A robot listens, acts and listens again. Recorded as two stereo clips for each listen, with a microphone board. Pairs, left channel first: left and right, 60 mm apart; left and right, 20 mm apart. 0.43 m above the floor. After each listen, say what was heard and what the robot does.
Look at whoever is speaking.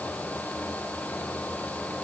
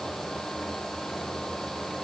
Keep listening.
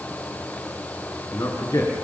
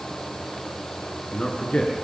The man speaking: about 70° left or 110° left. Turn 70° left.
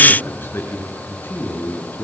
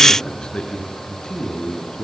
So it is at 40° left. Turn 40° left.
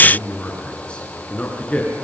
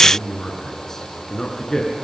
The man speaking is now 20° left. Turn 20° left.
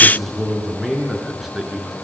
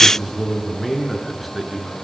Found it: a man speaking, straight ahead, over 4 m away.